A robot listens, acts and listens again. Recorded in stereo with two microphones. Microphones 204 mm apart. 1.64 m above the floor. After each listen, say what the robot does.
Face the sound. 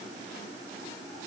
Keep listening.
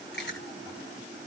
Turn 65° left.
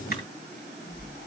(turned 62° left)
Turn 50° left.
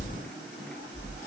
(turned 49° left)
Facing the chewing, over 4 m away.